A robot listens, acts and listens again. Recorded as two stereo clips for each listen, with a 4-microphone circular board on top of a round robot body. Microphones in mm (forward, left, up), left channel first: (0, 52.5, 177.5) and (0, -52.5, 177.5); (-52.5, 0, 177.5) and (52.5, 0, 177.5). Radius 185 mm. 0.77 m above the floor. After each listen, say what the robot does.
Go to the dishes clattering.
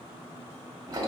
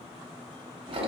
Keep listening.
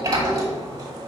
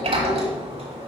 Keep listening.
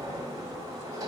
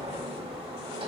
I can't make out dishes clattering to turn to.